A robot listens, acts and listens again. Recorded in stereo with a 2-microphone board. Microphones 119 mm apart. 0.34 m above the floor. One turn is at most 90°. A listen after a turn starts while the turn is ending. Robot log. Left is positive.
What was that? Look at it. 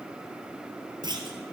note: The clunk: about 40° right or 140° right.
cmd yaw -40
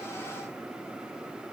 cmd idle
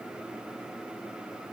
end: I heard a clunk, but can't make it out now. It was about straight ahead or 100° right.